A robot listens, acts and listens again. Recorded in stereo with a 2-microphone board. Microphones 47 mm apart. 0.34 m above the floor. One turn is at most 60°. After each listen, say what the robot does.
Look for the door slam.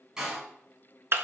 Turn 30° right.
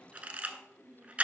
Keep listening.
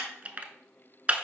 I heard a door slam, but can't make it out now. It was about 15° left or 135° right.